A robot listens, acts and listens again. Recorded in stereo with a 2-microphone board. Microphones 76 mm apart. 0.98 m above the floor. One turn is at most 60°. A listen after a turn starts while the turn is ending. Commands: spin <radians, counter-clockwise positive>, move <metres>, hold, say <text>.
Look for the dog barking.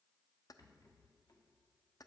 hold
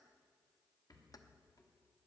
hold
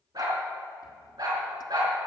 spin -1.05
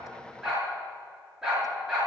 say Facing the dog barking.